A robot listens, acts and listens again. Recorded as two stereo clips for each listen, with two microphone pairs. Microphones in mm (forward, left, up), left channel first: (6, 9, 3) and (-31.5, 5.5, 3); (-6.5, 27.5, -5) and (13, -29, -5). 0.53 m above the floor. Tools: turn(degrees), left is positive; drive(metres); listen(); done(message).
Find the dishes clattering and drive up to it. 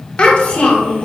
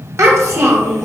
listen()
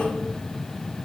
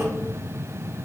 listen()
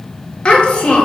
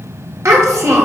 done("I can't make out dishes clattering, only a child speaking.")